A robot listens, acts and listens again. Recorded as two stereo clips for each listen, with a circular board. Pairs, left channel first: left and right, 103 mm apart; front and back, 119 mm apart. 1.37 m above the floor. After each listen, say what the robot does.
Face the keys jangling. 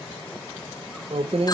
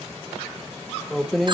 Turn 90° right.
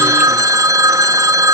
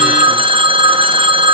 Keep listening.
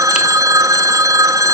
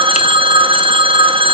Keep listening.
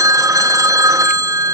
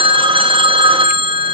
Facing where the keys jangling came from. I can't hear it now.